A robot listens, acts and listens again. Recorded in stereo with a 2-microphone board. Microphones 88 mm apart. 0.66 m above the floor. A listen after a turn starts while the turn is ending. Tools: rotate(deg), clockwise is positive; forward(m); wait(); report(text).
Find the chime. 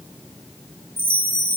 rotate(20)
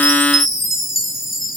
report("Found it: a chime, straight ahead.")